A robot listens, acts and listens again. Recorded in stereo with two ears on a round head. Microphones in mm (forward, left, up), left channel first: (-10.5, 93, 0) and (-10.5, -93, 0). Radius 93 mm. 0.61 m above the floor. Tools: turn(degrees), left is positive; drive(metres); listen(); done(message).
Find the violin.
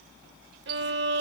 turn(degrees=-55)
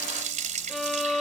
done("Found it: a violin, straight ahead.")